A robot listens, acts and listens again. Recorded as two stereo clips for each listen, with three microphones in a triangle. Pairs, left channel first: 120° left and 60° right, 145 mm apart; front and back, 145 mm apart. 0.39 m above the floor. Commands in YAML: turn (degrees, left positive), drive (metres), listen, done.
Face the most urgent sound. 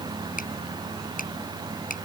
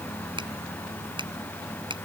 listen: true
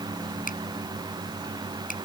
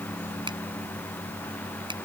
listen: true
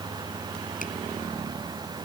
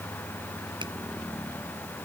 done: "I can't make out anything urgent, only a finger snap."